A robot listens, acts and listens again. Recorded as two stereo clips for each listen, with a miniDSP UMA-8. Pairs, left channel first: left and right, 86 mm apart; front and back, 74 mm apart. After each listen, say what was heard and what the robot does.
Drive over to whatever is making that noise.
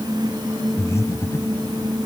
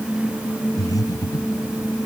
The breathing: 35° left. Turn 35° left.
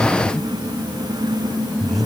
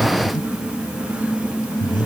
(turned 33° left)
Drive 1.0 m forward.
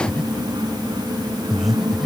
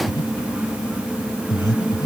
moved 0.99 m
Drive 1.0 m forward.
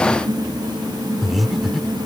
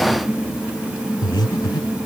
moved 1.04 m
Drive 1.0 m forward.
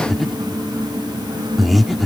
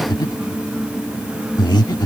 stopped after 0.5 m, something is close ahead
Arrived at the breathing, straight ahead.